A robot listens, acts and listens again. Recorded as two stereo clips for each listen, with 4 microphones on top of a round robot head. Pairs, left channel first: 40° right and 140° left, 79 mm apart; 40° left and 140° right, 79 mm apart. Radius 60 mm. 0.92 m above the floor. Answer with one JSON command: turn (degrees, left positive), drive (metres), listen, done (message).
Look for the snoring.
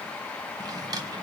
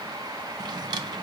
{"listen": true}
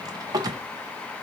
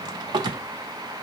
{"listen": true}
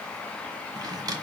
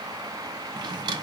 {"done": "I can't make out snoring, only a drawer."}